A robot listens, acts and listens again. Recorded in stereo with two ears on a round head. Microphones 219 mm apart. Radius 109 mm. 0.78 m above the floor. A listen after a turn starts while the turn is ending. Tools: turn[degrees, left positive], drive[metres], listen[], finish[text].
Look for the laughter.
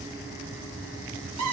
Action: listen[]
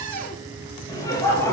Action: turn[30]
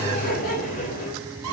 Thought: So it is at 145° left.
Action: turn[145]
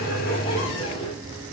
Action: listen[]
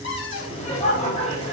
Thought: The laughter is now 30° left.
Action: turn[30]
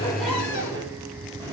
Action: listen[]
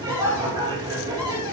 Thought: The laughter is now 15° right.
Action: turn[-15]
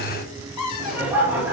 Thought: The laughter is now 10° right.
Action: turn[-10]
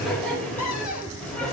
Action: finish[Facing the laughter.]